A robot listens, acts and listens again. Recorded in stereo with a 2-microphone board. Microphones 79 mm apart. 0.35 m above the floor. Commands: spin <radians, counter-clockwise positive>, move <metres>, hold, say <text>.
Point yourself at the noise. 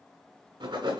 spin -1.57
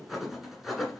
say Facing the writing.